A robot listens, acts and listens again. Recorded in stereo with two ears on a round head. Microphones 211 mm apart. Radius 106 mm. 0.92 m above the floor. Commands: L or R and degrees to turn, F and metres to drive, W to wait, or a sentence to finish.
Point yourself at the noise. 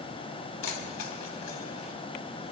L75
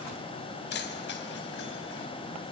L45
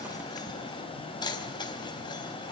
L20
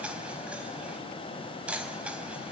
Found it: keys jangling, straight ahead.